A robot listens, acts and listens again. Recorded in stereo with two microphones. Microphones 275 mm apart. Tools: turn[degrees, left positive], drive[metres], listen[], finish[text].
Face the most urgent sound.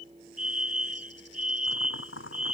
Thought: The fire alarm: about 60° right or 120° right.
Action: turn[-60]
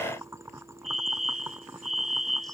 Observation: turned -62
Thought: So it is at 55° right.
Action: turn[-55]
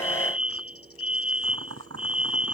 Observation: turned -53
Action: finish[Found it: a fire alarm, straight ahead.]